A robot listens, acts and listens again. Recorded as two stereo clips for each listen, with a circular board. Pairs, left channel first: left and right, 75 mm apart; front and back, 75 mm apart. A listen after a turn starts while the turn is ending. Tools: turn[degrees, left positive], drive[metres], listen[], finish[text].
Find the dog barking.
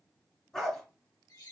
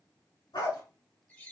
Thought: The dog barking: 10° left.
Action: turn[10]
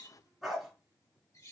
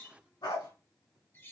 Action: finish[Found it: a dog barking, straight ahead, 2 to 4 m away.]